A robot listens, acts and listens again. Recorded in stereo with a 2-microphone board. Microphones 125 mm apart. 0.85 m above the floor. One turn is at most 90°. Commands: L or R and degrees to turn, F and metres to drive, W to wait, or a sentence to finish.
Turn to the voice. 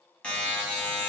W
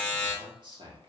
R40
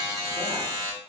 W
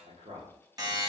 R90
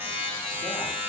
W
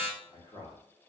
L40
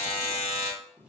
Found it: a man speaking, straight ahead, 1 to 2 m away.